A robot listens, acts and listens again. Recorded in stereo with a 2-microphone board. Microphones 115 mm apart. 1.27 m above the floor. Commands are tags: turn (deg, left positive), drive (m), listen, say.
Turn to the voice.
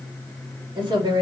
<turn deg="-40"/>
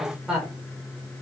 <say>Facing the woman speaking, 2 to 4 m away.</say>